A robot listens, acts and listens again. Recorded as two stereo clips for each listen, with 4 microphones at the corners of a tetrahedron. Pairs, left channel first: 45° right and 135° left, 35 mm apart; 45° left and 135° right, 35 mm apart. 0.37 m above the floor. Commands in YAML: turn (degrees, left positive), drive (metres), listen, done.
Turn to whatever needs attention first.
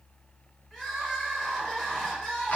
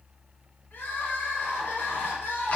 turn: 30
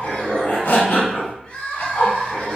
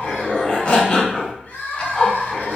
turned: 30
turn: 10
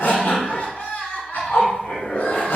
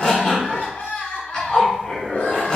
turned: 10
done: "Found it: crying, straight ahead."